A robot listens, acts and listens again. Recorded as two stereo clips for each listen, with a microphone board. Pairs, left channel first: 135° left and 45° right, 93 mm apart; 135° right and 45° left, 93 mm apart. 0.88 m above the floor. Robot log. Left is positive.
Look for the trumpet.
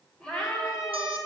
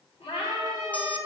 note: The trumpet: 90° left.
cmd yaw +90
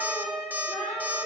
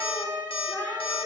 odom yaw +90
note: The trumpet is now 35° left.
cmd yaw +35
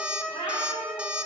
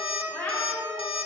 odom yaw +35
note: The trumpet is now 30° left.
cmd yaw +30
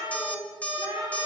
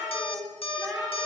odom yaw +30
cmd idle
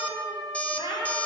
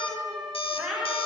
end: Found it: a trumpet, straight ahead.